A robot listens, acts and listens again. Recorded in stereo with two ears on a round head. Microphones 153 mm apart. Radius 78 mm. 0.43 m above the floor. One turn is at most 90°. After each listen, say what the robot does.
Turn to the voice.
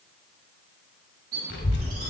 Turn 70° left.
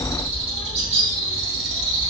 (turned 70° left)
Turn 25° left.
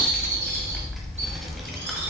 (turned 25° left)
Found it: a child speaking, straight ahead.